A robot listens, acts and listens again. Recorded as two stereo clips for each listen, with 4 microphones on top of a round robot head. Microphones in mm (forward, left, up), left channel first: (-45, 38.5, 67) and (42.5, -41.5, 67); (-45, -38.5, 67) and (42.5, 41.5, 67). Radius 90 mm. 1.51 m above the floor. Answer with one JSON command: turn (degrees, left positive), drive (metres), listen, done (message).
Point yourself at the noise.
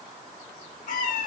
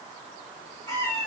{"turn": 160}
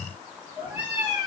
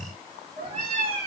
{"turn": 45}
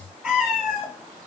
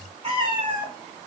{"turn": 50}
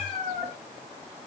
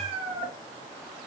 {"turn": 15}
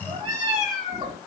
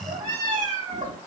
{"done": "Facing the cat meowing."}